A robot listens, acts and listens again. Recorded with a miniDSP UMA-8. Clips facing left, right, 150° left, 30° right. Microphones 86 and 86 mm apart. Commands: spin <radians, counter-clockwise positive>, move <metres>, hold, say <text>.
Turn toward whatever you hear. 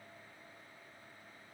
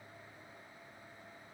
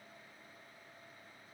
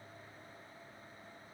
hold
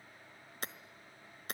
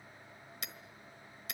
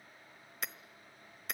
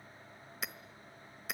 spin 0.96
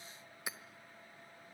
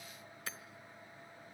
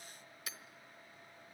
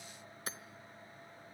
spin 0.26
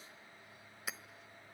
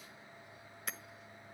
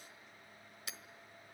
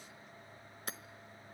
say Found it: hammering, straight ahead.